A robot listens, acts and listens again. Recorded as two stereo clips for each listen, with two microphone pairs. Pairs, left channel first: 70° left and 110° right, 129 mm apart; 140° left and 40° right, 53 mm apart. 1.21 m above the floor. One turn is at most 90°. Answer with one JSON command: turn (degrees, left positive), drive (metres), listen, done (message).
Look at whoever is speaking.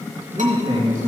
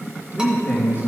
{"turn": -90}
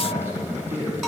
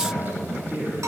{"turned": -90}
{"turn": -90}
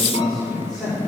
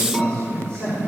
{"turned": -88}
{"turn": -35}
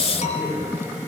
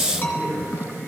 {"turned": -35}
{"done": "Facing the man speaking."}